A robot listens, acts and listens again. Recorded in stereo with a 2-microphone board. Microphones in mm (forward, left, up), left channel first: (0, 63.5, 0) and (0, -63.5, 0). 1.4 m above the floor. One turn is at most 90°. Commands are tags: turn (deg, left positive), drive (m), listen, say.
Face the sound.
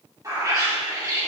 <turn deg="-30"/>
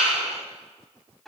<say>Found it: a bird, straight ahead.</say>